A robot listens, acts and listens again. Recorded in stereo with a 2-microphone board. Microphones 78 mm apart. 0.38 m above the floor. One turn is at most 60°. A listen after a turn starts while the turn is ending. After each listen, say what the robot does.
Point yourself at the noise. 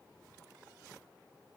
Keep listening.
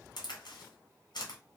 Turn 60° left.
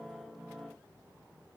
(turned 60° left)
Keep listening.
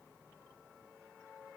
I heard a crack, but can't make it out now. It was about 10° left or 50° left.